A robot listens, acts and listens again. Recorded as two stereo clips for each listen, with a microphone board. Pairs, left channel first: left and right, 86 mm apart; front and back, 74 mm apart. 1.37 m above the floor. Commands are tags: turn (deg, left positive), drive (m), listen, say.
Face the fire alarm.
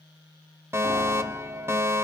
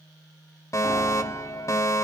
<turn deg="-35"/>
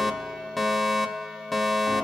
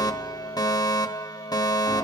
<say>Facing the fire alarm.</say>